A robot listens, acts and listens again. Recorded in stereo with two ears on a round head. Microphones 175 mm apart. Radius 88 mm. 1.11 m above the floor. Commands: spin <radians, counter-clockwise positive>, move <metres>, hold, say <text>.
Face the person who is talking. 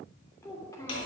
spin 0.26
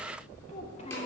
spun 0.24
hold
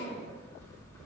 hold
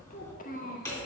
spin 2.36
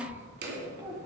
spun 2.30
spin -0.35
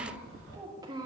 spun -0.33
spin -0.35
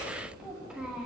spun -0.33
hold
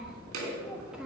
hold
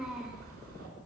say I heard a child speaking from this way, but can't make it out now.